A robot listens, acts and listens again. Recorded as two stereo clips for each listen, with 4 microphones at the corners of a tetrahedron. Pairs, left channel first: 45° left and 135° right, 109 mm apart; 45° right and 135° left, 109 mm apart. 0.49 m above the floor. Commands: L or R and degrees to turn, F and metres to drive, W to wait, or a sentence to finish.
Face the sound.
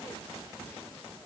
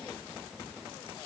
W
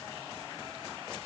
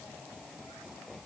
W
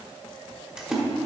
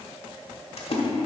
R55
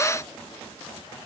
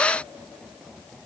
I heard a splash from this way, but can't make it out now.